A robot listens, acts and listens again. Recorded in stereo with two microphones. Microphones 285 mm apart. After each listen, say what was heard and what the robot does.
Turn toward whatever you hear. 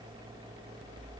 Keep listening.
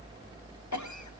Turn 90° left.
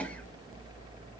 Keep listening.
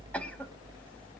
Keep listening.
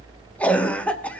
Facing the cough, under 1 m away.